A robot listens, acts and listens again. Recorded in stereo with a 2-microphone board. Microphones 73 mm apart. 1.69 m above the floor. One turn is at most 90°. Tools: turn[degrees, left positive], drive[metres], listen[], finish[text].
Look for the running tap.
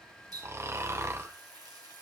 Thought: The running tap: about 60° right or 120° right.
Action: turn[-60]
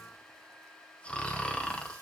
Action: listen[]
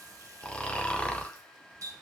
Thought: So it is at 55° right.
Action: turn[-55]
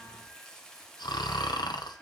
Thought: The running tap is now 10° left.
Action: turn[10]
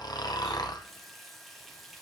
Action: finish[Facing the running tap, 1 to 2 m away.]